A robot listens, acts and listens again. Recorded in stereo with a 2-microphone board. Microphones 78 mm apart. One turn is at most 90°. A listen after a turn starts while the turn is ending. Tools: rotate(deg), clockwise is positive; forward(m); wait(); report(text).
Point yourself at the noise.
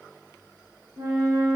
rotate(55)
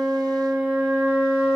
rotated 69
rotate(45)
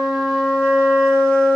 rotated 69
rotate(-25)
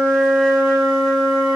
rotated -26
report("Found it: a flute, straight ahead.")